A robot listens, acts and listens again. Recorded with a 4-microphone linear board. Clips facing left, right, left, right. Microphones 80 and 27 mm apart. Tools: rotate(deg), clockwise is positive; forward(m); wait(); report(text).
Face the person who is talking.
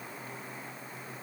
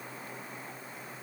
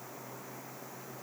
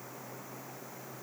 wait()
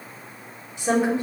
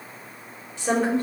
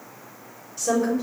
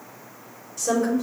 rotate(-15)
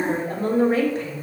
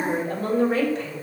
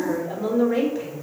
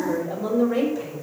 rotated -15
rotate(-30)
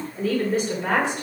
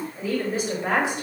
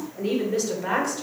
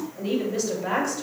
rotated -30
rotate(-120)
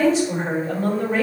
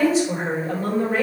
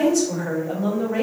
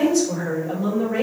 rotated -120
rotate(35)
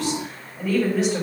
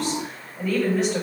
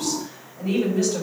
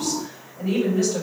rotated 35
report("Facing the woman speaking, over 4 m away.")